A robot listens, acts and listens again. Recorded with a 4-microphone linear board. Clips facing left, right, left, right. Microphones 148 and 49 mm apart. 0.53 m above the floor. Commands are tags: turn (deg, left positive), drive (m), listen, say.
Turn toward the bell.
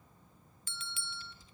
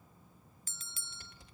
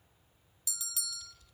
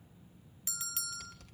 <turn deg="-40"/>
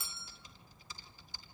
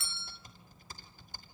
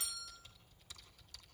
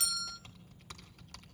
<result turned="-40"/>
<turn deg="-95"/>
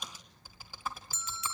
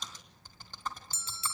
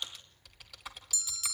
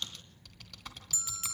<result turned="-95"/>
<turn deg="-30"/>
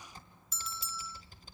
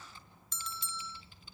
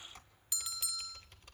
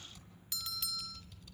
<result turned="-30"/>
<say>Found it: a bell, straight ahead.</say>